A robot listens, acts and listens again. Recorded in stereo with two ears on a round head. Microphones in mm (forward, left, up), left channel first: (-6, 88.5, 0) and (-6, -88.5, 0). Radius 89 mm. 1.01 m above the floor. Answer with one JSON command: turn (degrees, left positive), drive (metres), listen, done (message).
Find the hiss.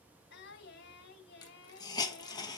{"turn": 20}
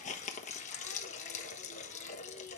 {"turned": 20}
{"turn": 135}
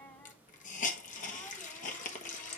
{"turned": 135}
{"turn": 45}
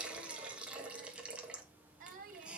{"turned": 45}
{"done": "Facing the hiss."}